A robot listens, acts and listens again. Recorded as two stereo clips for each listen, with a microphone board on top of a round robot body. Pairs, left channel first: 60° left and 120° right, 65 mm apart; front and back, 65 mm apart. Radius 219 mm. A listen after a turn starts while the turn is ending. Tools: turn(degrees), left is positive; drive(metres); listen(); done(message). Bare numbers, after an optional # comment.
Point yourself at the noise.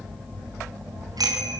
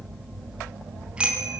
# The bicycle bell: 105° right.
turn(-105)
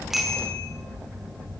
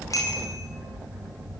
listen()
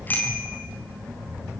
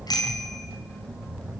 done("Found it: a bicycle bell, straight ahead, over 4 m away.")